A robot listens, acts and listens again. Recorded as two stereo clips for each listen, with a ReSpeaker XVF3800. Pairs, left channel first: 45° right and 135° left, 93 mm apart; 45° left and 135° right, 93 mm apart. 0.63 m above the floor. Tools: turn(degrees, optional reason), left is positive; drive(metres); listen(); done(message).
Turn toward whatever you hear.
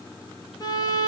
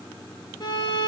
turn(degrees=10, reason="The violin: 10° left.")
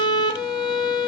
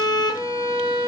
done("Found it: a violin, straight ahead.")